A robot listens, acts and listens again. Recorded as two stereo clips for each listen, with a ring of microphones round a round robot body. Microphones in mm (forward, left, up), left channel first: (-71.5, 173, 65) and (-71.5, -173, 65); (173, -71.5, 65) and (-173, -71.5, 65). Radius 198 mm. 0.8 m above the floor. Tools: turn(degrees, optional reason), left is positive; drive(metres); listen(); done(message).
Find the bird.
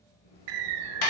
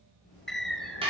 turn(degrees=-90, reason="The bird: 90° right.")
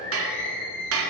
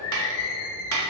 turn(degrees=25, reason="The bird is now 25° left.")
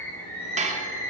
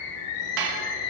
done("Found it: a bird, straight ahead, 1 to 2 m away.")